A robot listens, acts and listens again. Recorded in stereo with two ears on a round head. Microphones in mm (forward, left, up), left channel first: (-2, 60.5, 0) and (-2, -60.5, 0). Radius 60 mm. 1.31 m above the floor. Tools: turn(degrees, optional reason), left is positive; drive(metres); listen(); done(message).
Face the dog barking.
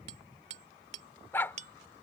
turn(degrees=15, reason="The dog barking: about 15° left or 165° left.")
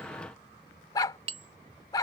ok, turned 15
turn(degrees=150, reason="So it is at 150° left.")
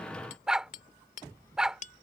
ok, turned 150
done("Found it: a dog barking, straight ahead.")